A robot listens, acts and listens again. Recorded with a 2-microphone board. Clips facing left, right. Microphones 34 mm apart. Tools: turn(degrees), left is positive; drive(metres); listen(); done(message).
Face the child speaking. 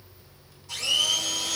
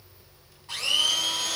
listen()
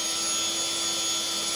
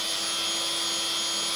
listen()
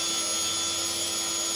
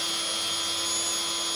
done("I can't make out a child speaking, only a blender.")